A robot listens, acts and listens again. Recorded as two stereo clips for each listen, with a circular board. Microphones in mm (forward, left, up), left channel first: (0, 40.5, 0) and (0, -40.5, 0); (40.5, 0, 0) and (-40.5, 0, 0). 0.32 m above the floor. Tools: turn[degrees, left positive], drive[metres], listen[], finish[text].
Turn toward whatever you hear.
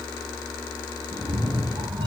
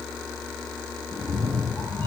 Thought: The cat meowing: 60° right.
Action: turn[-60]
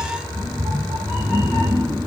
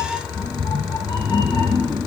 Thought: The cat meowing is now 15° right.
Action: turn[-15]
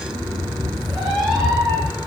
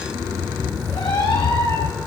Action: finish[Facing the cat meowing.]